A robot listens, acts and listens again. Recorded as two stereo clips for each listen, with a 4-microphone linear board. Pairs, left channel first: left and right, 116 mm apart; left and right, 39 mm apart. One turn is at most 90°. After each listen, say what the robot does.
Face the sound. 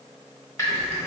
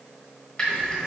Turn 30° left.
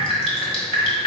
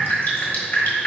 Turn 90° left.
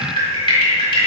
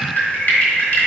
Turn 45° left.
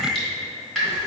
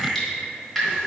Facing the dripping, 1 to 2 m away.